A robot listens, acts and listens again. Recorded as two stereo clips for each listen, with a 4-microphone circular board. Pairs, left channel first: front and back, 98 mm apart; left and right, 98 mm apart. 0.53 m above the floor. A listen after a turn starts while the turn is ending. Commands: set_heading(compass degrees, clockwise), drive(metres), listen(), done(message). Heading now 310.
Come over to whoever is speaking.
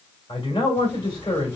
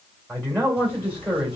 set_heading(330)
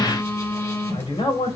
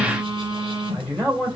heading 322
set_heading(332)
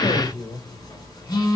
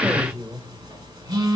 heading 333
drive(1.0)
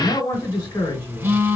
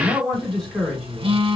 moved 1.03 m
drive(1.0)
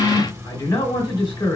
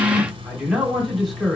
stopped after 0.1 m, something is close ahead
done("I am next to the man speaking.")